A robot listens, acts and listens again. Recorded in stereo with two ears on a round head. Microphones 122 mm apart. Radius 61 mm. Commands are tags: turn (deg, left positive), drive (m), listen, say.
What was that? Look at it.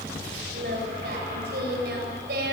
<turn deg="-90"/>
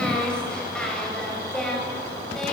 <say>Found it: singing, straight ahead, over 4 m away.</say>